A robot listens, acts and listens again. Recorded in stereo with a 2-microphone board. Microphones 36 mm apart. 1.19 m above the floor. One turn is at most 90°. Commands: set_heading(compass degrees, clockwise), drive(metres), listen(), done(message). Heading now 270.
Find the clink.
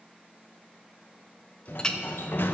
set_heading(250)
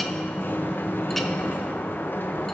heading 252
listen()
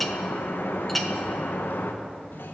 done("Found it: a clink, straight ahead.")